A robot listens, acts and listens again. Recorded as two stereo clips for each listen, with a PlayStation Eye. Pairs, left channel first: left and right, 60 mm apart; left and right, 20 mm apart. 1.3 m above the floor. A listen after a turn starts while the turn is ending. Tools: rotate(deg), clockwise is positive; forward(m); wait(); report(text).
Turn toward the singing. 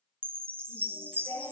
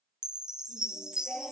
rotate(-70)
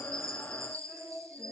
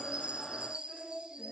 report("Found it: singing, straight ahead, over 4 m away.")